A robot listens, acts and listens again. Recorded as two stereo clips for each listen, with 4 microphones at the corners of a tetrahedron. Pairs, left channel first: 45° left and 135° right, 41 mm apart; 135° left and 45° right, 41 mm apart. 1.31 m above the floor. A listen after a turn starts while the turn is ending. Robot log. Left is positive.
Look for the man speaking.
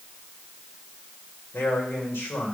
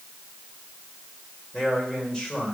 note: The man speaking: 60° left.
cmd yaw +60
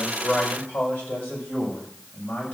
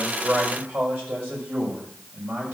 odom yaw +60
end: Facing the man speaking, over 4 m away.